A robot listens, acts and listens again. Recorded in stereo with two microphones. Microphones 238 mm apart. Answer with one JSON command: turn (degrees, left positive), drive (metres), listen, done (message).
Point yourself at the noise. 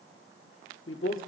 {"turn": 60}
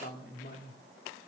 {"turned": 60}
{"turn": 50}
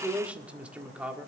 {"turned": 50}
{"done": "Facing the man speaking."}